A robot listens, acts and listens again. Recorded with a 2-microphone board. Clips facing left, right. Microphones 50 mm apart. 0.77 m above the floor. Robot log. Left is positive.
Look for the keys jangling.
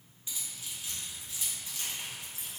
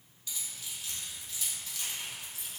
note: The keys jangling: about 20° left or 160° left.
cmd yaw +20
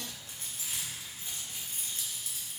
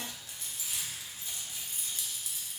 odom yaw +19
note: So it is at 145° left.
cmd yaw +145
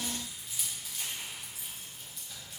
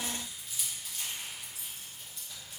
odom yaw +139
end: Facing the keys jangling.